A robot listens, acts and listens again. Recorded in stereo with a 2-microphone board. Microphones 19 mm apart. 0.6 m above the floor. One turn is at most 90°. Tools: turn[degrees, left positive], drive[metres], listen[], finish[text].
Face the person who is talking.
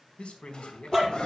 Action: turn[90]
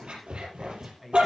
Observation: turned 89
Thought: So it is at 10° right.
Action: turn[-10]
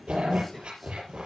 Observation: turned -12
Action: listen[]
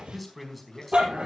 Action: finish[Found it: a man speaking, straight ahead.]